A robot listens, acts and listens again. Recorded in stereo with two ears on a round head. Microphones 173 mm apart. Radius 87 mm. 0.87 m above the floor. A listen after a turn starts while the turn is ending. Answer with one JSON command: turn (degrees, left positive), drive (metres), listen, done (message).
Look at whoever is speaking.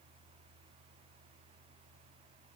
{"listen": true}
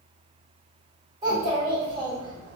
{"turn": -25}
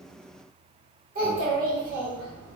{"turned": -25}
{"turn": -130}
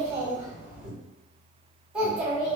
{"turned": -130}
{"done": "Facing the child speaking."}